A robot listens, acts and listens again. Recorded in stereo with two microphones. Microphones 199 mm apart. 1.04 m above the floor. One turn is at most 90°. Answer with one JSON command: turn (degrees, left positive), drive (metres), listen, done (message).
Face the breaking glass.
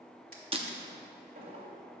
{"turn": -30}
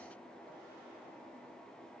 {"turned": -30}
{"listen": true}
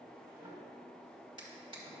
{"done": "I heard breaking glass, but can't make it out now. It was about straight ahead or 120° right."}